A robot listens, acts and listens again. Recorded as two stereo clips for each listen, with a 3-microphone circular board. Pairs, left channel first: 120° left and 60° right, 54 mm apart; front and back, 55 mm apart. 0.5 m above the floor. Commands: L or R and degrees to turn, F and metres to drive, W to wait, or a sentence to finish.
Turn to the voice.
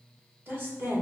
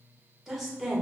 R95
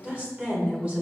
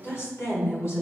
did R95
Found it: a woman speaking, straight ahead.